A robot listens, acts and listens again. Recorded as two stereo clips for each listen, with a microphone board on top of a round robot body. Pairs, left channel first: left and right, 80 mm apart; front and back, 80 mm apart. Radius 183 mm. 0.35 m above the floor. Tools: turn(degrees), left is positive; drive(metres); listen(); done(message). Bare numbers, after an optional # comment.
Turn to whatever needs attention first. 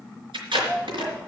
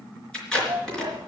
# The shout: 155° right.
turn(-155)
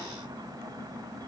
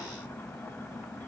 listen()
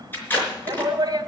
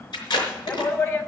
# The shout is now 50° right.
turn(-50)
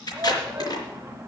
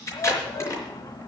# The shout is now 25° right.
turn(-25)
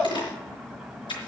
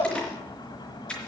done("Found it: a shout, straight ahead.")